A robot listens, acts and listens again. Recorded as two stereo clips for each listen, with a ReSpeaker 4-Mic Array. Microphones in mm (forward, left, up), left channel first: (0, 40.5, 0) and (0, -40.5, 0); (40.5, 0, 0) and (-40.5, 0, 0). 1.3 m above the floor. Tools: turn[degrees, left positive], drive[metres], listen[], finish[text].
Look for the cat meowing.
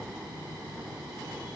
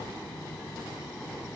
Action: listen[]
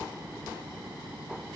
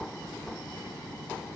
Action: listen[]
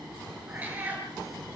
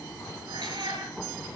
Thought: The cat meowing: 160° right.
Action: turn[-160]
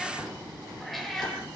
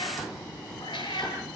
Action: finish[Found it: a cat meowing, straight ahead.]